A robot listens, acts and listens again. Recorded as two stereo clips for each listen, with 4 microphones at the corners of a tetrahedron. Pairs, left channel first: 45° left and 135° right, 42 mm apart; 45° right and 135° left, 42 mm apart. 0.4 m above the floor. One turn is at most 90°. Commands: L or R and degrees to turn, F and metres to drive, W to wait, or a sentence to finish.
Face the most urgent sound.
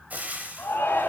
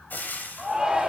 L55
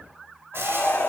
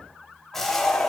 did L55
L15
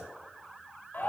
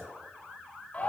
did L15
Facing the shout, 2 to 4 m away.